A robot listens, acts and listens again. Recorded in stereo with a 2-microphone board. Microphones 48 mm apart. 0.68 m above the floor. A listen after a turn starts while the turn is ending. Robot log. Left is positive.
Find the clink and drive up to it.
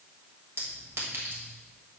note: The clink: about 65° right or 115° right.
cmd yaw -65
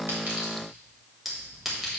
cmd fwd 1.0
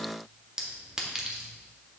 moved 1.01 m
note: The clink is now 10° right.
cmd yaw -10
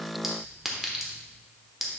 cmd fwd 1.0
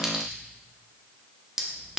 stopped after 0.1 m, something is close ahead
end: I am next to the clink.